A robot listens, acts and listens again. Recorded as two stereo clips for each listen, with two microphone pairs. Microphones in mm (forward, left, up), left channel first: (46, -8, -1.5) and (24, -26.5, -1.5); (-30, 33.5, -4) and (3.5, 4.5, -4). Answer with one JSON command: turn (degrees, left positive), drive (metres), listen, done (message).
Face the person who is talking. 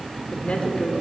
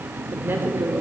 {"done": "Facing the woman speaking, 2 to 4 m away."}